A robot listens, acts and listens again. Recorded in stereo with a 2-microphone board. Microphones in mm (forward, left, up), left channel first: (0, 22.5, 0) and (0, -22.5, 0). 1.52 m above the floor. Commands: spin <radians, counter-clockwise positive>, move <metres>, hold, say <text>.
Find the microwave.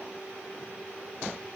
hold
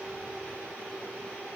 hold
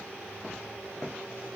say I can't make out a microwave to turn to.